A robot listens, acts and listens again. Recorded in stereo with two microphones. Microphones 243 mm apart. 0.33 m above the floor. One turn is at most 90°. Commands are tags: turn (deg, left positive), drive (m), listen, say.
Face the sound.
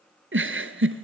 <turn deg="-55"/>
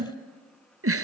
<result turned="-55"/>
<turn deg="-70"/>
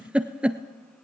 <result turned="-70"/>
<say>Found it: a giggle, straight ahead.</say>